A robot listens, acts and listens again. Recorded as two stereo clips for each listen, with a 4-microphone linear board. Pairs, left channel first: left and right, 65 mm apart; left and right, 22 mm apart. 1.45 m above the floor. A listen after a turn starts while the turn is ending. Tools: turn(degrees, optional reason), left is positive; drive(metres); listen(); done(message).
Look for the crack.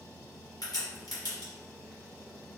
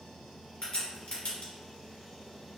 turn(degrees=90)
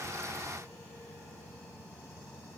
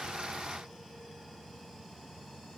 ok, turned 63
turn(degrees=25, reason="Nothing new. It was at 25° left.")
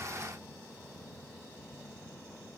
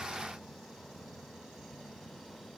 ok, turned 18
turn(degrees=10, reason="Nothing new. It was at 10° left.")
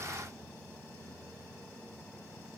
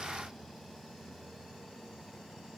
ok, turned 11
done("I heard a crack from this way, but can't make it out now.")